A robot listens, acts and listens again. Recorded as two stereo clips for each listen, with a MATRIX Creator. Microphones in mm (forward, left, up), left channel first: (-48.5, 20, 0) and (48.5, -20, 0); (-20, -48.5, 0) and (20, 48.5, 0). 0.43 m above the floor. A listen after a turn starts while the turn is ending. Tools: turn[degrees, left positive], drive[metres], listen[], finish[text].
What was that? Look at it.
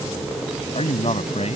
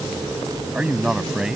Thought: The man speaking: 155° left.
Action: turn[155]
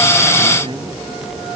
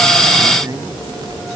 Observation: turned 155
Thought: The man speaking is now 10° left.
Action: turn[10]
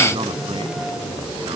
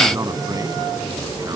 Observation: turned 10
Action: listen[]
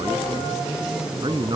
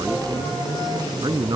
Thought: The man speaking is now 20° left.
Action: turn[20]
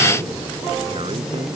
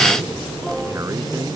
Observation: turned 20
Action: listen[]
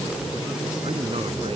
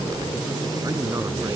Action: finish[Facing the man speaking.]